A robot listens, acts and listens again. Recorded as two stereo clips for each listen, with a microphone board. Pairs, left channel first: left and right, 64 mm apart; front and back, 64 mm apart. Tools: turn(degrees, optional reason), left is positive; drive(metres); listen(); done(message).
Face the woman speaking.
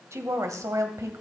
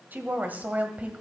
turn(degrees=-115, reason="The woman speaking: 115° right.")
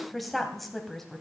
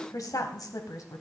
done("Found it: a woman speaking, straight ahead, 2 to 4 m away.")